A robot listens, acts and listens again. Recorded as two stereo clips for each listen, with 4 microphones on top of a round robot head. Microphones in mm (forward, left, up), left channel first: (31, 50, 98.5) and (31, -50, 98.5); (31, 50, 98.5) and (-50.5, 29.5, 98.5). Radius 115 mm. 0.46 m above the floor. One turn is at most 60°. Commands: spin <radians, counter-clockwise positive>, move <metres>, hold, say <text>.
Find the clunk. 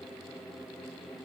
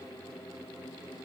hold
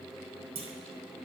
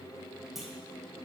spin -1.05
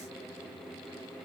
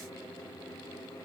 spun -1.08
spin -0.26
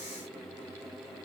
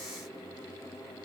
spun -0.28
say Facing where the clunk came from. I can't hear it now.